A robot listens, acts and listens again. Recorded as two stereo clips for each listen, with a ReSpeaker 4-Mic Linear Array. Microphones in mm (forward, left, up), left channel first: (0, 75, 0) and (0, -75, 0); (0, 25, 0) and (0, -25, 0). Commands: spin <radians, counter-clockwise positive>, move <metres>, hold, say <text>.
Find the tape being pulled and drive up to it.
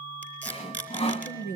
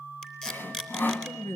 spin 0.52
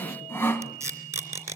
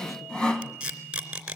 spin -0.35
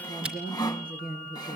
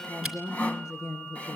hold
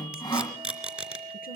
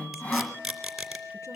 move 1.0
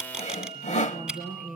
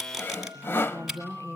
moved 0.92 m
move 1.0
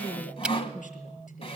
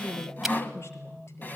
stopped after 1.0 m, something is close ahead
hold
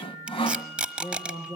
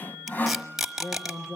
spin -0.17
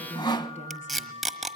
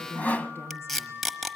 say Arrived at the tape being pulled, straight ahead.